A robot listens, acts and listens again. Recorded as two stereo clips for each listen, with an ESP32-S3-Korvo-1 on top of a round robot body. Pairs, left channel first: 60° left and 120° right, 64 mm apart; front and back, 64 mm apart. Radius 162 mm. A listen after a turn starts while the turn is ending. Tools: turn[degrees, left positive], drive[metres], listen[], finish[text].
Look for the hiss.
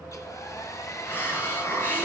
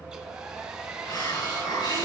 Action: finish[Found it: a hiss, straight ahead.]